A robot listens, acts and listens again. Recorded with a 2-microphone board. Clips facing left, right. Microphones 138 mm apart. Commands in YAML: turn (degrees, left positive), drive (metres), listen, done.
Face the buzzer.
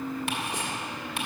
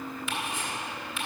listen: true
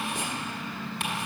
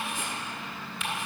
listen: true
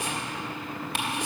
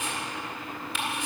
done: "I can't make out a buzzer to turn to."